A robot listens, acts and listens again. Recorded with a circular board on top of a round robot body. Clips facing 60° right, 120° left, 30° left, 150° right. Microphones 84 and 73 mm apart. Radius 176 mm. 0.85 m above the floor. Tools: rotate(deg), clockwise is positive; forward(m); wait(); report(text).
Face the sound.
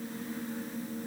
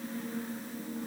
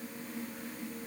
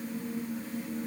wait()
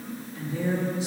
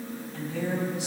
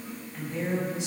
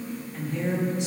rotate(-115)
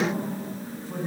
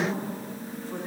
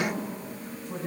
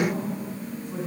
report("Found it: a woman speaking, straight ahead.")